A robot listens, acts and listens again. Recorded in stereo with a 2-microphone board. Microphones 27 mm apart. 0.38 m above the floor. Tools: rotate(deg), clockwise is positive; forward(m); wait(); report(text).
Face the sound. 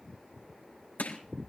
rotate(-90)
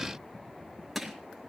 report("Found it: crushing, straight ahead, 2 to 4 m away.")